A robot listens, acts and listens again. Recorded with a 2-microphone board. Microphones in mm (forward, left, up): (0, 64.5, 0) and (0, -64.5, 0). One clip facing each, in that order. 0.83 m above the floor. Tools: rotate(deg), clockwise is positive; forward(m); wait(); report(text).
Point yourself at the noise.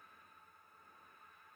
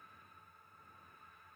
wait()
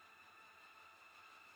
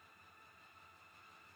wait()
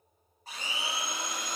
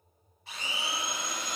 rotate(-45)
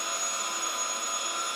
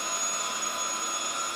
rotate(-10)
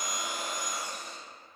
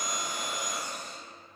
report("Facing the blender, 1 to 2 m away.")